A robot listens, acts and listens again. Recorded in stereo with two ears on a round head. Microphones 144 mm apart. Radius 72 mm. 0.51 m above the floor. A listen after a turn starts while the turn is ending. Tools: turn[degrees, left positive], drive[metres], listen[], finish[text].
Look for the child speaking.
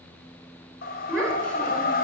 Action: turn[30]
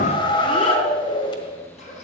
Action: listen[]
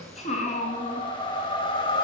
Thought: So it is at 135° left.
Action: turn[135]
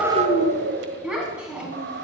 Action: finish[Facing the child speaking.]